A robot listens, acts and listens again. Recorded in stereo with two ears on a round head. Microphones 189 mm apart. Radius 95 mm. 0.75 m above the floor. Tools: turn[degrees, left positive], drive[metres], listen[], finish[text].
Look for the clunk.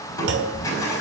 Thought: The clunk: about 55° right or 125° right.
Action: turn[-55]
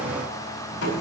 Action: listen[]
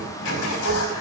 Action: finish[I heard a clunk, but can't make it out now. It was about straight ahead or 70° right.]